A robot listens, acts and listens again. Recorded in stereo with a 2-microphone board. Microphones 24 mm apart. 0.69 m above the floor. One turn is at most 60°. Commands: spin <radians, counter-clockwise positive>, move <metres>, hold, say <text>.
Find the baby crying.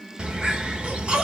spin -1.05
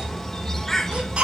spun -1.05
spin -0.96
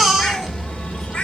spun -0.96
say Found it: a baby crying, straight ahead.